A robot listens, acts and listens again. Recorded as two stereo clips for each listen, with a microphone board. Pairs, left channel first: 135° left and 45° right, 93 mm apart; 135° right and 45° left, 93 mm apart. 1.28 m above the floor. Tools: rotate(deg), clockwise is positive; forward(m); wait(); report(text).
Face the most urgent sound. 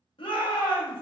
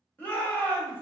rotate(-155)
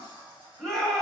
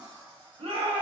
rotate(-50)
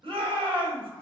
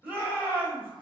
rotate(25)
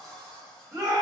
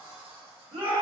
rotate(-10)
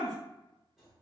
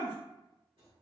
report("Facing the shout.")